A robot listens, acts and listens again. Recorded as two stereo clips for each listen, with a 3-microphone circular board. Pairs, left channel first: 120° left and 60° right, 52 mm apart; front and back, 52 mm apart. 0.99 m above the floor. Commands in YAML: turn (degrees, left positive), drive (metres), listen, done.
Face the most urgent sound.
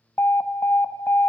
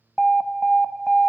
turn: 80
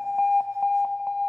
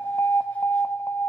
turn: 25
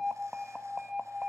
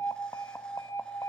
turn: 15
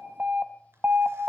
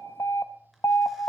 done: "Facing the alarm, 1 to 2 m away."